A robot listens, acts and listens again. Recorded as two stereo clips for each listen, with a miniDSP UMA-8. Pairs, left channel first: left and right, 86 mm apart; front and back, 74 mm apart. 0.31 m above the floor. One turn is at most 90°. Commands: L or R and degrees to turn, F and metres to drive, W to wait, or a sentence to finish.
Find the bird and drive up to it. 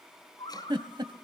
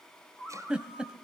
L70
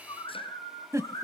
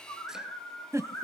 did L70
L35
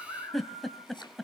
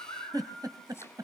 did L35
R10
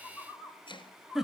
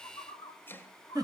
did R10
F1.0
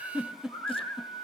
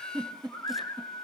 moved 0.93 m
F1.0
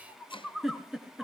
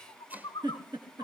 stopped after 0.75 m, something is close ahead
Arrived at the bird, straight ahead.